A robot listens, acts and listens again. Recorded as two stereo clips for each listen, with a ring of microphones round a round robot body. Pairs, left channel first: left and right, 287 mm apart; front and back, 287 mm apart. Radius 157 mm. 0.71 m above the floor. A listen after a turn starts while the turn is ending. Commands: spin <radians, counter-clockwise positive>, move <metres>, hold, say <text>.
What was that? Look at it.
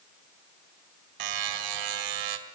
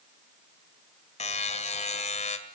spin -1.13
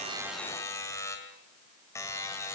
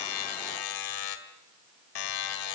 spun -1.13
spin 0.17
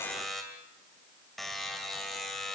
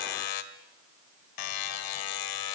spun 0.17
say Found it: a buzzer, straight ahead, 2 to 4 m away.